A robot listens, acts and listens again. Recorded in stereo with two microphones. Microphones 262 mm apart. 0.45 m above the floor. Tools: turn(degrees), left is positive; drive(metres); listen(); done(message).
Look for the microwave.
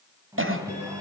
turn(degrees=-30)
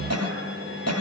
turn(degrees=-135)
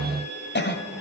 listen()
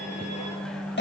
done("Facing the microwave, 2 to 4 m away.")